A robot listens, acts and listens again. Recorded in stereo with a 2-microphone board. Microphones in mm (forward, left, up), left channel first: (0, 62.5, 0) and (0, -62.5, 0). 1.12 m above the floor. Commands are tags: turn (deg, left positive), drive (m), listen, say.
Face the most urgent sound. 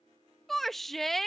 <turn deg="30"/>
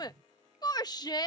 <turn deg="145"/>
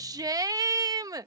<turn deg="-30"/>
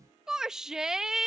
<say>Facing the shout.</say>